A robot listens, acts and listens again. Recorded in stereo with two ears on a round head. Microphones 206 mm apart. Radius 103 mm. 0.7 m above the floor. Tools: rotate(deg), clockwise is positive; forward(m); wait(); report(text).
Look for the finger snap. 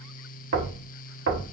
wait()
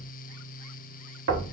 wait()
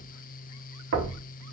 report("I can't make out a finger snap, only knocking.")